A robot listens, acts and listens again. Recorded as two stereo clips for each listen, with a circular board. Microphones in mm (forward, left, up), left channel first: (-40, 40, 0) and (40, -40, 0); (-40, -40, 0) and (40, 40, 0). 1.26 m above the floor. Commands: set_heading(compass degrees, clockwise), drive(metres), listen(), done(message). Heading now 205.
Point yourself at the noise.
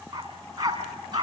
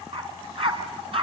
set_heading(195)
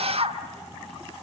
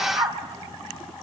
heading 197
done("Facing the dog barking, over 4 m away.")